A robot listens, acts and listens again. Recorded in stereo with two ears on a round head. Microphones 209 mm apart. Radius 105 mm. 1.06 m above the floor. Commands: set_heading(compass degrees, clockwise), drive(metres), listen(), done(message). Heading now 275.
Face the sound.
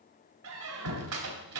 set_heading(345)
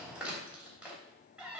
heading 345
done("Found it: a squeak, straight ahead, 2 to 4 m away.")